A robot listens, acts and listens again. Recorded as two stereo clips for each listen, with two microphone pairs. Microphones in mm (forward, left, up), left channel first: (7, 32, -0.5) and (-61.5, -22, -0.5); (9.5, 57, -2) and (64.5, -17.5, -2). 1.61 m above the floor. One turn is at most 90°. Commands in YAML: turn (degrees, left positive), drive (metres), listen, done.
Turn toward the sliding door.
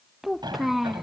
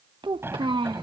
turn: -90
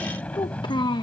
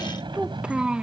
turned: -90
turn: -35
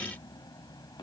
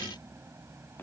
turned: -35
done: "Found it: a sliding door, straight ahead."